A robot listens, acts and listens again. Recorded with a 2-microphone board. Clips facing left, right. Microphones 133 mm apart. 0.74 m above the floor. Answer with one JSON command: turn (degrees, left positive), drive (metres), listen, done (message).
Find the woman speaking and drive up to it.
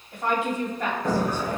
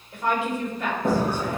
{"turn": 45}
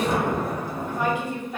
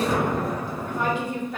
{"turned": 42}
{"turn": 10}
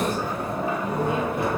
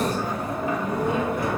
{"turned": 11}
{"listen": true}
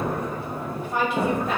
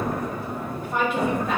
{"drive": 1.0}
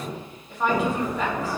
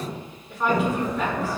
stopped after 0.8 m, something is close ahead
{"done": "I am next to the woman speaking."}